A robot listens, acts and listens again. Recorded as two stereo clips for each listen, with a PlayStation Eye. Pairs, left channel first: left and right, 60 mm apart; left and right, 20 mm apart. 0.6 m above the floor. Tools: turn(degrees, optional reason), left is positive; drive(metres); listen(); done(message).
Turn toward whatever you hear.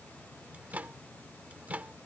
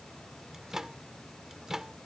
turn(degrees=-25, reason="The microwave: about 25° right or 155° right.")
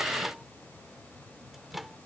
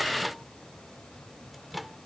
done("Facing the microwave.")